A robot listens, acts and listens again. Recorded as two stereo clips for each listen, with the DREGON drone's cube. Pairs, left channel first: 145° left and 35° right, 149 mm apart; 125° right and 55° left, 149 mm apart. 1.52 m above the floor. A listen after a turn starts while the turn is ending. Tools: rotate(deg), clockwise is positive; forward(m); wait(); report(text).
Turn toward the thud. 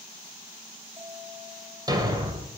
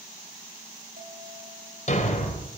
rotate(95)
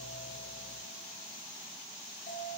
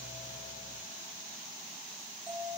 report("Facing where the thud came from. I can't hear it now.")